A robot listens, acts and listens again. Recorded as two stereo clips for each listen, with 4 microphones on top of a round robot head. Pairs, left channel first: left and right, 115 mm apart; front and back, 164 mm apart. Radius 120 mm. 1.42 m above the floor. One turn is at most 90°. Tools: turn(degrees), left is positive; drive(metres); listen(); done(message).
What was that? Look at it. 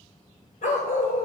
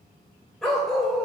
turn(degrees=90)
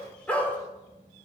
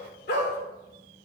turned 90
turn(degrees=15)
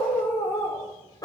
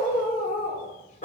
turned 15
turn(degrees=40)
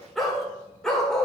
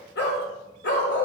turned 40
done("Facing the dog barking, 1 to 2 m away.")